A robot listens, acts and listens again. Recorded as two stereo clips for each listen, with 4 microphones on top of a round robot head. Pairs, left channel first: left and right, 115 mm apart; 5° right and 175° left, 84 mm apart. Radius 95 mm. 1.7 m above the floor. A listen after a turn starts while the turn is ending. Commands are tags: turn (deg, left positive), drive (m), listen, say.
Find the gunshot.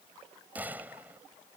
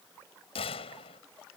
<turn deg="-10"/>
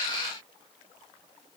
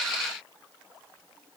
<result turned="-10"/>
<say>I heard a gunshot from this way, but can't make it out now.</say>